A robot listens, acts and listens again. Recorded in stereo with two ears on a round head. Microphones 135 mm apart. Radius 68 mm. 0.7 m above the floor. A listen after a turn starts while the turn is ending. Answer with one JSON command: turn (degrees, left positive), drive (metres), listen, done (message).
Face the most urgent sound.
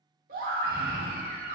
{"turn": -65}
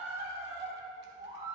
{"turn": -40}
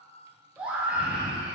{"turn": -10}
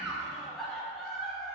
{"done": "Found it: a scream, straight ahead, 1 to 2 m away."}